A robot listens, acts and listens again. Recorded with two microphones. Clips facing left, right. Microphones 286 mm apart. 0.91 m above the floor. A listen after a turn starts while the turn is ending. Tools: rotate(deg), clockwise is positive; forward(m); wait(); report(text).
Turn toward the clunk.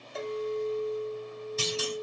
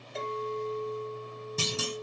rotate(55)
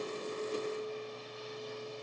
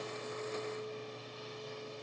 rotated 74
wait()
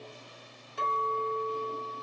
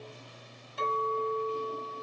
report("I heard a clunk, but can't make it out now. It was about 15° left or 50° right.")